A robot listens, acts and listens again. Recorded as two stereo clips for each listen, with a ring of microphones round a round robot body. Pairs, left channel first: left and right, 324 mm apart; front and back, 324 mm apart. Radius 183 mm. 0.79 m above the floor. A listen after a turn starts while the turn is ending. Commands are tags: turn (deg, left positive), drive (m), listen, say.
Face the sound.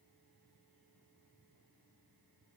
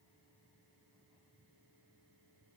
<listen/>
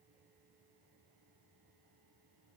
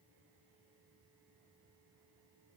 <listen/>
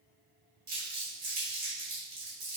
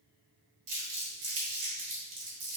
<turn deg="-150"/>
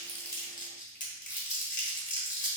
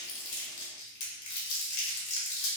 <turn deg="25"/>
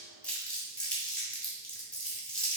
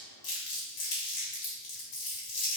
<say>Found it: crumpling, straight ahead.</say>